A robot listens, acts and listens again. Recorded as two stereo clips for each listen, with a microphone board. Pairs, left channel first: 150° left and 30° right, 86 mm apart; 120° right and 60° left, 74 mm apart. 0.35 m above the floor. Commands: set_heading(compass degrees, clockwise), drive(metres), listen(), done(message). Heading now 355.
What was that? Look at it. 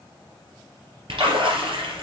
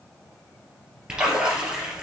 set_heading(15)
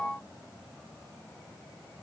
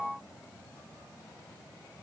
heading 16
done("Facing where the splash came from. I can't hear it now.")